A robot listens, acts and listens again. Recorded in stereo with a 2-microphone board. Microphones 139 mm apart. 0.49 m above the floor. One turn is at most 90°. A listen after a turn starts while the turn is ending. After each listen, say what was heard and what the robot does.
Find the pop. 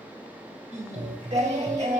Turn 90° right.
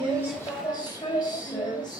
I heard a pop from this way, but can't make it out now.